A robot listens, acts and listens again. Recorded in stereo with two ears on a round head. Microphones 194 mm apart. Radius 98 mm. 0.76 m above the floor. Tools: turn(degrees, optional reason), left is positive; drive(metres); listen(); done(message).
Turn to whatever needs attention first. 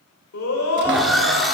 turn(degrees=75, reason="The scream: about 75° left or 105° left.")
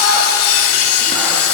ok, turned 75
listen()
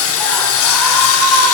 done("Found it: a scream, straight ahead.")